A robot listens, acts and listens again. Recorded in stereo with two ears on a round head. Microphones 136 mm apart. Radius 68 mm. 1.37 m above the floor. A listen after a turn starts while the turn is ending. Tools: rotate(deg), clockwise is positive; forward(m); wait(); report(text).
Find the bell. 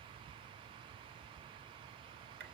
wait()
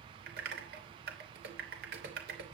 wait()
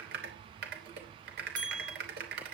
rotate(30)
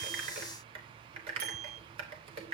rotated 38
wait()
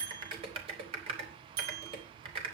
rotate(115)
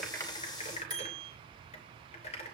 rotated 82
rotate(30)
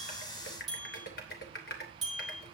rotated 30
report("Found it: a bell, straight ahead, over 4 m away.")